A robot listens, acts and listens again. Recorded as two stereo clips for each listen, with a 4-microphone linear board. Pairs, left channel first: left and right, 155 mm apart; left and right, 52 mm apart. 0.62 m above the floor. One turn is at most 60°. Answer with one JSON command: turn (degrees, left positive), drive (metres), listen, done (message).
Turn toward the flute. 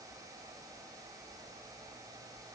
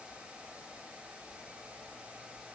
{"listen": true}
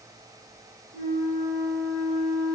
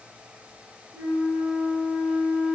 {"turn": -30}
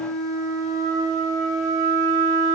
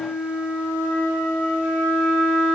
{"turn": 15}
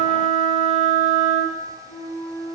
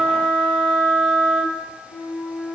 {"done": "Found it: a flute, straight ahead."}